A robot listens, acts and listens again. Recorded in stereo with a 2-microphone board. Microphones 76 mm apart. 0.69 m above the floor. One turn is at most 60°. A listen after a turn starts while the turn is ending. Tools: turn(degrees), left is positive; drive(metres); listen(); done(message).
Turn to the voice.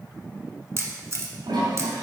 listen()
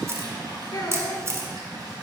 turn(degrees=60)
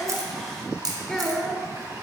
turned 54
turn(degrees=10)
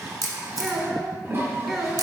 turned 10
done("Found it: a child speaking, straight ahead, 1 to 2 m away.")